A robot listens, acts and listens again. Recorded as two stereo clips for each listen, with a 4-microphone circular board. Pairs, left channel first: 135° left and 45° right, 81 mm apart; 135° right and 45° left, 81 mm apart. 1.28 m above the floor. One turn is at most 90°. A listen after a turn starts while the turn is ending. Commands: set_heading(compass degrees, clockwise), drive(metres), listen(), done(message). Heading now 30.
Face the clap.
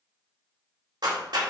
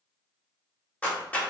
set_heading(95)
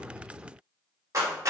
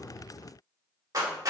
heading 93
done("Found it: a clap, straight ahead, 2 to 4 m away.")